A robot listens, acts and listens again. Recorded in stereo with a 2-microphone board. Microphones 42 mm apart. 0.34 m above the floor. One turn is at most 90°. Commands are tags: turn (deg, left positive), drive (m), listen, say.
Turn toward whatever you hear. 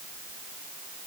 <listen/>
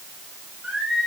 <turn deg="-20"/>
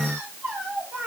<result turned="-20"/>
<turn deg="-90"/>
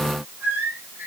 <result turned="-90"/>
<turn deg="-55"/>
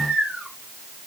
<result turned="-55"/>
<turn deg="-20"/>
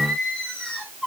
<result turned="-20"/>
<say>Found it: singing, straight ahead, over 4 m away.</say>